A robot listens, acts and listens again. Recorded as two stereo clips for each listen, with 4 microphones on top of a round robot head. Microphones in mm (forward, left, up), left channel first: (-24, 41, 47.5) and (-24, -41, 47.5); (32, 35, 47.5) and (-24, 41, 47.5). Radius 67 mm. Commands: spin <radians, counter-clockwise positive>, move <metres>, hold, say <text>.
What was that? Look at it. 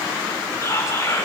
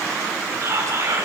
spin 2.53
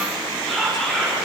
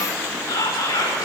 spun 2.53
say Facing the whispering.